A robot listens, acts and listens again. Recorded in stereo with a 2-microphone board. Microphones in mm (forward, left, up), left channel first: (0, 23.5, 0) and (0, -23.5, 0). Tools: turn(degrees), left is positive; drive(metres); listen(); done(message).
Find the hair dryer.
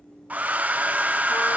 turn(degrees=-35)
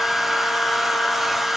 done("Found it: a hair dryer, straight ahead.")